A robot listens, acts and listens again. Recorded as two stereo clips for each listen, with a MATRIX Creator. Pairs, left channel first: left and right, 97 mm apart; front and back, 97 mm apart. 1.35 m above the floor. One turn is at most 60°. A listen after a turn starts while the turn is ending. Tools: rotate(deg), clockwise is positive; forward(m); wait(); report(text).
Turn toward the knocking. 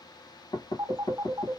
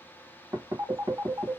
rotate(-60)
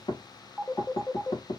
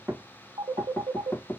rotate(-60)
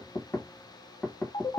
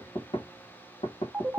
rotate(-10)
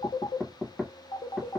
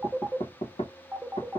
report("Facing the knocking, 1 to 2 m away.")